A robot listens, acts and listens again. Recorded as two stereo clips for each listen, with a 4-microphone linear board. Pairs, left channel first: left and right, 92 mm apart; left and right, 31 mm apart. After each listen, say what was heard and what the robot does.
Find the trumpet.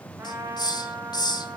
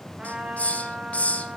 The trumpet: about 30° right or 150° right. Turn 30° right.
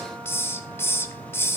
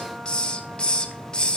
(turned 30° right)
Keep listening.
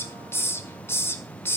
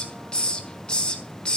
Keep listening.
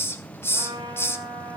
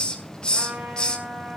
So it is at 120° right. Turn 120° right.
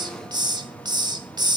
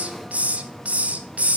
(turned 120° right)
Keep listening.
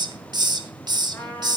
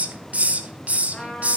The trumpet is now 20° left. Turn 20° left.
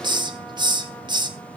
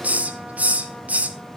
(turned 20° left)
Keep listening.
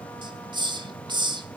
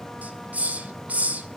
Keep listening.
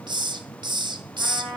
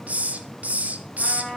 Facing the trumpet, over 4 m away.